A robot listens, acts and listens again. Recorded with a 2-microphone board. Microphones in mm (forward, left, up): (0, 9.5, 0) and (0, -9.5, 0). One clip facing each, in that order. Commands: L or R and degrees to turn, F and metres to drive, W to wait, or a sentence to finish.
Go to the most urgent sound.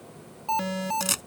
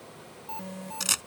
L65
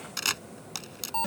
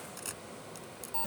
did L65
L35
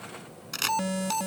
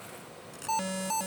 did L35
F1.0
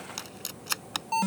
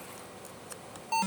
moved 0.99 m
F1.0
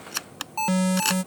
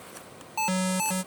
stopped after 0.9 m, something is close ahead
I am next to the alarm.